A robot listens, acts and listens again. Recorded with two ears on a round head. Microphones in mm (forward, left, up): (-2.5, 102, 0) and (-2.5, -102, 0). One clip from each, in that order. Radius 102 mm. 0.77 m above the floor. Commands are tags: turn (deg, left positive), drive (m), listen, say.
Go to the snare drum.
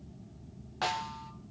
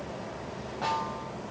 <turn deg="70"/>
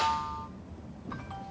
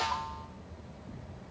<turn deg="15"/>
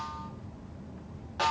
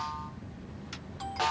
<drive m="1.0"/>
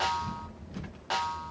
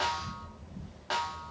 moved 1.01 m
<turn deg="10"/>
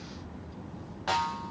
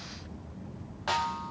<drive m="1.0"/>
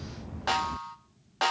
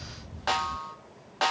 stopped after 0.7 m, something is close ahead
<say>Arrived at the snare drum, straight ahead.</say>